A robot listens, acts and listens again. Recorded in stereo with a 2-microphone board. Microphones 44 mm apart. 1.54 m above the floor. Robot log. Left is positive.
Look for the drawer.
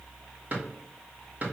note: The drawer: about 40° right or 140° right.
cmd yaw -40
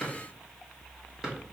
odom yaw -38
note: So it is at 15° right.
cmd yaw -15
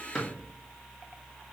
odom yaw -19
note: The drawer is now 10° left.
cmd yaw +10
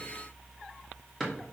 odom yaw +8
end: Facing the drawer, 1 to 2 m away.